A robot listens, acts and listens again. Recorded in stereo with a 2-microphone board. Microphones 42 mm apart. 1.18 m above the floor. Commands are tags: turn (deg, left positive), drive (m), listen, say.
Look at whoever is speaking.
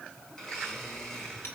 <listen/>
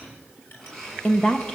<turn deg="20"/>
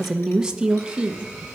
<turn deg="-25"/>
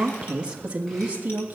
<turn deg="-35"/>
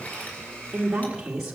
<turn deg="-15"/>
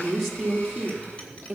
<say>Found it: a woman speaking, straight ahead, 2 to 4 m away.</say>